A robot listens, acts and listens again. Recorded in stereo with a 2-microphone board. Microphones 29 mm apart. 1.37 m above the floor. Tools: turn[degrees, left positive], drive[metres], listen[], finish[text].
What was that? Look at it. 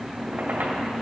Thought: The squeak: about 70° right or 110° right.
Action: turn[-70]
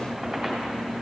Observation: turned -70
Action: finish[Found it: a squeak, straight ahead, 2 to 4 m away.]